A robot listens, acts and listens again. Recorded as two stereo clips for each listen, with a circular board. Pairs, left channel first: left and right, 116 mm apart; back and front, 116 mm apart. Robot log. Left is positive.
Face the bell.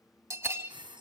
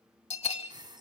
note: The bell: 155° right.
cmd yaw -155
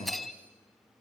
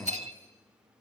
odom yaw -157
end: Found it: a bell, straight ahead.